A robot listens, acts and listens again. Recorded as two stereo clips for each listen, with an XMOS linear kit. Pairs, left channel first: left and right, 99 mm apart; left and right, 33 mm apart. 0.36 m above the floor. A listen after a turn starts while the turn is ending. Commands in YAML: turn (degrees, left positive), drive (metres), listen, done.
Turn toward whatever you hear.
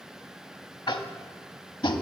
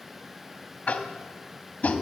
turn: 50
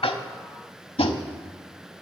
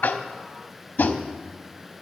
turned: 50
turn: 80
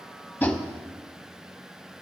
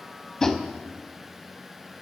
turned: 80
turn: 15
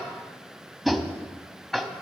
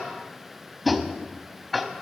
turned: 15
done: "Facing the tapping."